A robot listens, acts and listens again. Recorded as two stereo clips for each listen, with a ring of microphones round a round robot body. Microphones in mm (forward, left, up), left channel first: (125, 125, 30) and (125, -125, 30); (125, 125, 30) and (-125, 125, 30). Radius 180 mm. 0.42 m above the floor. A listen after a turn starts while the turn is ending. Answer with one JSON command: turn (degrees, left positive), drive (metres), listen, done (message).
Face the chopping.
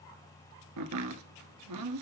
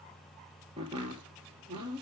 {"turn": -105}
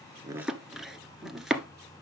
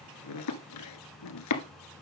{"done": "Facing the chopping."}